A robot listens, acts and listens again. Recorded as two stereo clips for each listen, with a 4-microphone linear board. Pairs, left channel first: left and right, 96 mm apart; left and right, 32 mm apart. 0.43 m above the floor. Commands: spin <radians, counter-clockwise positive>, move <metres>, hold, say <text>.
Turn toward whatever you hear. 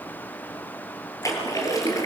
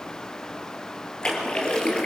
spin 0.61
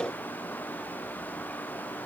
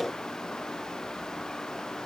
hold
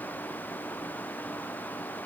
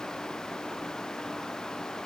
say I heard a splash, but can't make it out now. It was about straight ahead or 110° left.